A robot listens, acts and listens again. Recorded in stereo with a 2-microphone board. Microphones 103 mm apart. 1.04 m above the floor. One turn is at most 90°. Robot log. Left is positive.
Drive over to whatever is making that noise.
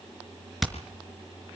cmd yaw +30
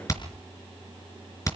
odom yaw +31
note: So it is at 150° left.
cmd yaw +90
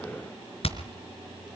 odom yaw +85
note: The hammering is now 65° left.
cmd yaw +65
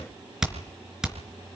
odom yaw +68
cmd fwd 1.0
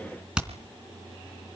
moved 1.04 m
note: The hammering is now 10° right.
cmd yaw -10
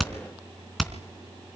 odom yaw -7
cmd fwd 1.0
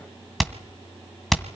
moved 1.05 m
cmd fwd 1.0
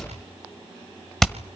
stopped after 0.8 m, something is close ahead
end: I am next to the hammering.